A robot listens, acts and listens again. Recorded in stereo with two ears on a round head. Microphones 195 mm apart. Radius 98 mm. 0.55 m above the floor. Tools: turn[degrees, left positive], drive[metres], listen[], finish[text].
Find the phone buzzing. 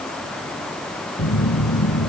Thought: The phone buzzing: about 45° left or 135° left.
Action: turn[45]
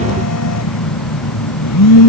Thought: So it is at 85° left.
Action: turn[85]
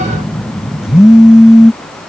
Action: finish[Facing the phone buzzing.]